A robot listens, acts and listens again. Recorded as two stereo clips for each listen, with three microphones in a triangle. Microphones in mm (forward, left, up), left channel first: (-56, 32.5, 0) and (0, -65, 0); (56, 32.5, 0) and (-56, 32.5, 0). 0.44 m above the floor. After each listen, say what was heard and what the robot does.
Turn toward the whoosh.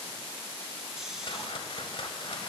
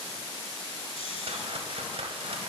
The whoosh: 155° left. Turn 155° left.
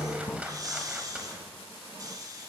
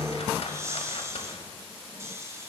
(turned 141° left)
Nothing new. It was at 15° left. Turn 15° left.
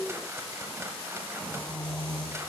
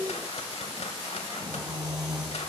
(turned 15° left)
Keep listening.
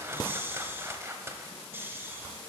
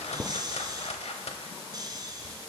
Facing the whoosh.